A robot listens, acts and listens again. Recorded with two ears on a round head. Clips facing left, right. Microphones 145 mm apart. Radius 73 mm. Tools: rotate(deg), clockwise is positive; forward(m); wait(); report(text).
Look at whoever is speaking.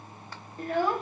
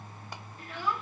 rotate(-40)
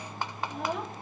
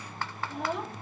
report("Facing the child speaking.")